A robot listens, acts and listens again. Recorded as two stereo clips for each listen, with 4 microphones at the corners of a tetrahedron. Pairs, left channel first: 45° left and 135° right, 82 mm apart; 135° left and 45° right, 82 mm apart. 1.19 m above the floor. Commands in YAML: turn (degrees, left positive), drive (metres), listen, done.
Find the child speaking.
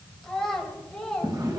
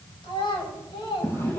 turn: 130
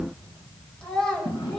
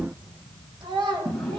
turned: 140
turn: -40
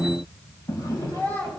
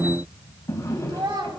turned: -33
turn: -20
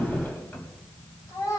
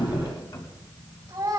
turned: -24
done: "Facing the child speaking, over 4 m away."